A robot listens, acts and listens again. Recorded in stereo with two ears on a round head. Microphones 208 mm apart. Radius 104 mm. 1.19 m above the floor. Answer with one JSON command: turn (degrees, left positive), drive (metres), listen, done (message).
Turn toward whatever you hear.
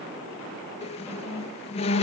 {"turn": 25}
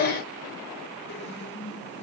{"turn": 125}
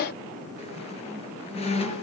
{"turn": 30}
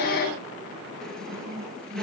{"done": "Found it: a squeak, straight ahead."}